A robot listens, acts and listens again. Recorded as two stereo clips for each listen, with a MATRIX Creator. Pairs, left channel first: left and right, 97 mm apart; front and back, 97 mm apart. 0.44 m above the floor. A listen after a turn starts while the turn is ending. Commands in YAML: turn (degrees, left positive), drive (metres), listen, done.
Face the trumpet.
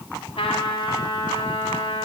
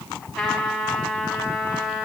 turn: 85
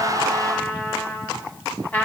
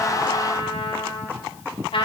turn: 20
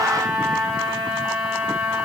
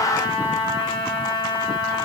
done: "Facing the trumpet, 1 to 2 m away."